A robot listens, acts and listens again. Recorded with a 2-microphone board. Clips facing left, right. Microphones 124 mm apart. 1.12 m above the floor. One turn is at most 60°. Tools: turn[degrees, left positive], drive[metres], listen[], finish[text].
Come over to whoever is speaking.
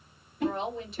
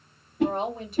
Thought: The woman speaking: about 50° right or 130° right.
Action: turn[-50]
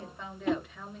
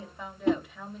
Action: drive[1.0]
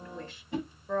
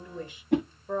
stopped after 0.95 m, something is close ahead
Thought: The woman speaking is now 15° right.
Action: turn[-15]
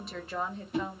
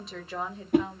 Action: finish[I am next to the woman speaking.]